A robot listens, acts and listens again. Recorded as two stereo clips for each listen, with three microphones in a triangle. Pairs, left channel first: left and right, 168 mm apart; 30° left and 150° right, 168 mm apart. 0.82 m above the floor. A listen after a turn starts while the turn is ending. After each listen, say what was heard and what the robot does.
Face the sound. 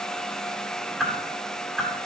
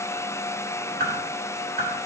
The whoosh: 175° right. Turn 175° right.
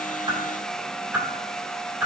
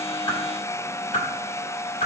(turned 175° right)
The whoosh is now 10° right. Turn 10° right.
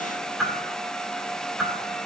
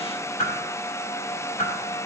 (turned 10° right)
Facing the whoosh.